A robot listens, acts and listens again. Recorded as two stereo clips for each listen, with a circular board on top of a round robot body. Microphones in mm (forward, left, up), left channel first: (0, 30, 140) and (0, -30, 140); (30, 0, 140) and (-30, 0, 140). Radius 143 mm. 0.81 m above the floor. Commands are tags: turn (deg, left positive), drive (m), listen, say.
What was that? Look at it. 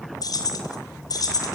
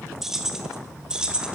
<turn deg="105"/>
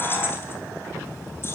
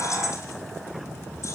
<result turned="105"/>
<listen/>
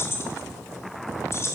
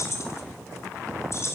<turn deg="45"/>
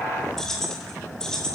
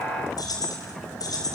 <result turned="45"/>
<turn deg="10"/>
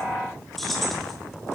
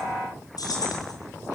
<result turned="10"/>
<say>Facing the keys jangling.</say>